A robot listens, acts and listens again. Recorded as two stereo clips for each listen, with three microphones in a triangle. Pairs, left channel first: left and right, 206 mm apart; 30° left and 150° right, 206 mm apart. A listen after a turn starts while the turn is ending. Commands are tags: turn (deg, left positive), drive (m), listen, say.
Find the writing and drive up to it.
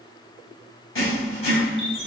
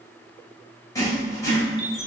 <turn deg="105"/>
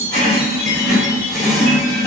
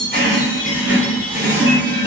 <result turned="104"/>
<drive m="1.0"/>
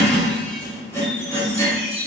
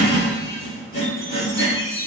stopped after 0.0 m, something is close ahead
<turn deg="15"/>
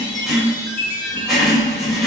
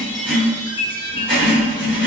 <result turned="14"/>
<say>Something is in my way. I am facing the writing but have not reached it.</say>